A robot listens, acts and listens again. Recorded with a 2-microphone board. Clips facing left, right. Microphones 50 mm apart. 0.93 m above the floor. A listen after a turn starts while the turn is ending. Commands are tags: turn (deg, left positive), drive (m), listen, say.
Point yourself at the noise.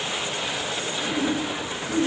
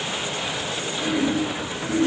<turn deg="-75"/>
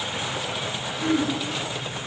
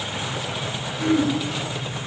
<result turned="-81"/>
<turn deg="-20"/>
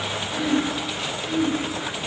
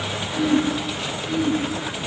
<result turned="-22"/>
<say>Found it: throat clearing, straight ahead.</say>